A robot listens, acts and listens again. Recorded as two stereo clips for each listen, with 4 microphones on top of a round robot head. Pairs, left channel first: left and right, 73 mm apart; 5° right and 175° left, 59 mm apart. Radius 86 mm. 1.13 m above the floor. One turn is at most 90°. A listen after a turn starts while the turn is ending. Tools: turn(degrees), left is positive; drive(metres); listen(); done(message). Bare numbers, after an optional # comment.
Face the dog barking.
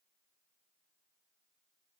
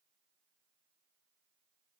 listen()
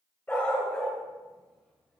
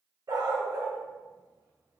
# The dog barking: 165° left.
turn(90)
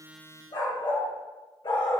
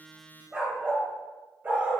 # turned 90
# The dog barking is now 115° left.
turn(90)
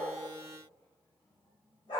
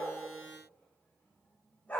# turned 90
# The dog barking is now 55° left.
turn(55)
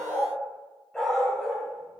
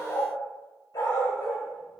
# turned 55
done("Found it: a dog barking, straight ahead.")